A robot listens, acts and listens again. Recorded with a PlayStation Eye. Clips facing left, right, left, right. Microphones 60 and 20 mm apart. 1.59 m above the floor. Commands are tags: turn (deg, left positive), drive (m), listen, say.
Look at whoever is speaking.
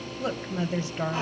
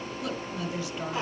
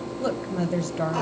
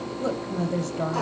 <turn deg="35"/>
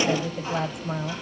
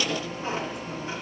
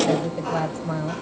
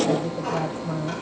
<turn deg="110"/>
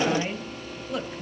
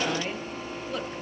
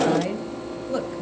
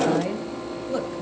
<say>Found it: a woman speaking, straight ahead.</say>